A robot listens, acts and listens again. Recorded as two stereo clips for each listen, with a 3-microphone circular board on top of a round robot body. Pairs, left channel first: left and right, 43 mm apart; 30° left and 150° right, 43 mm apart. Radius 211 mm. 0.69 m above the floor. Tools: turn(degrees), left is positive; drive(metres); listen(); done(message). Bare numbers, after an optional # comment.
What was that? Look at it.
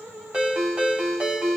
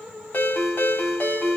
# The ringtone: 20° right.
turn(-20)
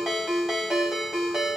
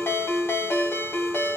done("Facing the ringtone.")